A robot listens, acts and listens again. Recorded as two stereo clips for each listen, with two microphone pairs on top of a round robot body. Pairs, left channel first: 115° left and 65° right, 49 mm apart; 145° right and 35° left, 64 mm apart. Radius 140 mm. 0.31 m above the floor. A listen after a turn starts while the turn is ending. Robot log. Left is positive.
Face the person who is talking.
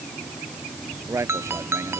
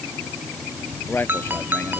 note: The man speaking: 90° right.
cmd yaw -90
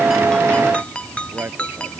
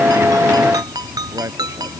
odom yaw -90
note: The man speaking is now 15° right.
cmd yaw -15
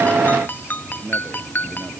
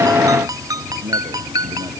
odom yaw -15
end: Facing the man speaking.